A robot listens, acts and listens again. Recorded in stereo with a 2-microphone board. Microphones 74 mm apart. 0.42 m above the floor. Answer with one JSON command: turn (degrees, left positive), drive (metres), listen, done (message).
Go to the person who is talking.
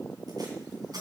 {"listen": true}
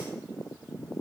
{"listen": true}
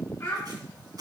{"turn": 30}
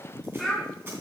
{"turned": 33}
{"drive": 1.0}
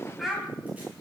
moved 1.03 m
{"drive": 1.0}
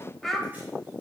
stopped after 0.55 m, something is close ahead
{"done": "Arrived at the child speaking, straight ahead."}